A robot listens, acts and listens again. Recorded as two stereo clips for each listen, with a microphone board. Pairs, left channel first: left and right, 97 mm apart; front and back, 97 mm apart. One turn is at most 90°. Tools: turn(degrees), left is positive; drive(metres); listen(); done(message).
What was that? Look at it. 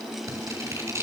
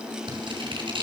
turn(degrees=-90)
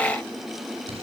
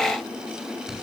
turn(degrees=-90)
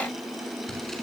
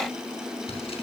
done("Facing the scissors.")